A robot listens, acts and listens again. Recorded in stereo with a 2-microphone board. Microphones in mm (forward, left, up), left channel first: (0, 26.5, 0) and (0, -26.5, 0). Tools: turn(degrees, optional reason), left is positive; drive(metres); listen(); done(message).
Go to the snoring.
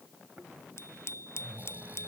turn(degrees=-30, reason="The snoring: about 30° right or 150° right.")
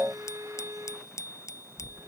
drive(metres=1.0)
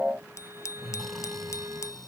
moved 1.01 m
drive(metres=1.0)
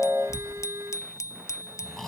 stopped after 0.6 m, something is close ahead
turn(degrees=10, reason="The snoring is now 10° left.")
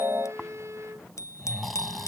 done("Arrived at the snoring, straight ahead.")